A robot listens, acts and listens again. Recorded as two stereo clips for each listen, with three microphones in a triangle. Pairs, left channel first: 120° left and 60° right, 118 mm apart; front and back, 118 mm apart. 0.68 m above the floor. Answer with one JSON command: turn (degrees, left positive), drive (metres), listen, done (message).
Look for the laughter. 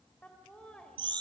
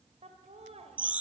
{"turn": -155}
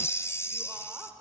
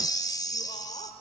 {"turn": 15}
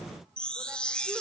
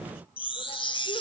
{"listen": true}
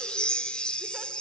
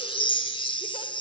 {"listen": true}
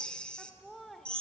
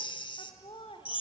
{"turn": 35}
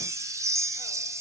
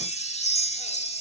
{"listen": true}
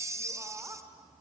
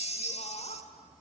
{"done": "Facing the laughter, 2 to 4 m away."}